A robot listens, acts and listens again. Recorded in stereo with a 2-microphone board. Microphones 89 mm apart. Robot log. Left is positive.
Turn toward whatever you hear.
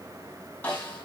note: The snare drum: about 20° left or 160° left.
cmd yaw +20
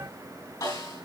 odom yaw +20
note: So it is at 135° left.
cmd yaw +135
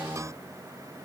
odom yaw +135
cmd idle
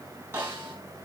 note: The snare drum is now 30° right.
cmd yaw -30
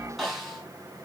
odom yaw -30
end: Facing the snare drum.